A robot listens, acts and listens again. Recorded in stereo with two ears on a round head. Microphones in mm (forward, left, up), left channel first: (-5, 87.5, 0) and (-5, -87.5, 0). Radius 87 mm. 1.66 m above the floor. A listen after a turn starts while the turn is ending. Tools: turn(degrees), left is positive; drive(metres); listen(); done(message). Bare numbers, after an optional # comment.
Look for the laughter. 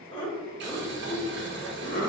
# The laughter: about 45° left or 135° left.
turn(45)
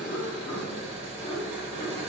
# So it is at 20° left.
turn(20)
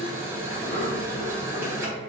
listen()
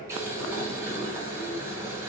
listen()
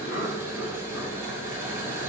# The laughter is now 45° left.
turn(45)
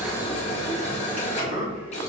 # The laughter is now 10° right.
turn(-10)
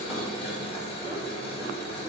listen()
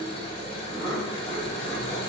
done("Found it: laughter, straight ahead.")